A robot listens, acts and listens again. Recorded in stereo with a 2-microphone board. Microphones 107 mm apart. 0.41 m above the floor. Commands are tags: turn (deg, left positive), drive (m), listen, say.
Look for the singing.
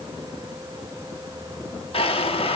<listen/>
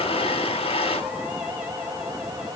<listen/>
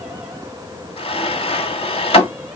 <say>I can't make out singing, only a drawer.</say>